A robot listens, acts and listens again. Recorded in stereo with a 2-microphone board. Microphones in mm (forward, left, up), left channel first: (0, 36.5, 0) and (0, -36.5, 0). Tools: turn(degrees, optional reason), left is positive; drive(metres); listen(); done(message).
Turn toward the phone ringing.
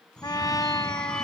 turn(degrees=30)
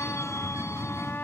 turn(degrees=140, reason="So it is at 140° left.")
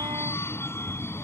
turn(degrees=35, reason="The phone ringing is now 35° left.")
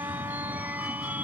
turn(degrees=-25, reason="The phone ringing is now 25° right.")
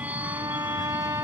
turn(degrees=-20, reason="The phone ringing is now 20° right.")
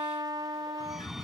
done("Facing the phone ringing.")